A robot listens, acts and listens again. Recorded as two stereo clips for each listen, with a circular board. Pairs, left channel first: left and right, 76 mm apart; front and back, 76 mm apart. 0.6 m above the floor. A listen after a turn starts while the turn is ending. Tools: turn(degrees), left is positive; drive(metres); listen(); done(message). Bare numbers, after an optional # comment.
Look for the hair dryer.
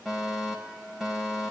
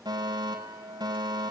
listen()
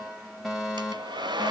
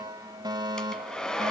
# The hair dryer: 80° right.
turn(-80)
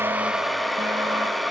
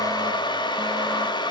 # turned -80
done("Found it: a hair dryer, straight ahead.")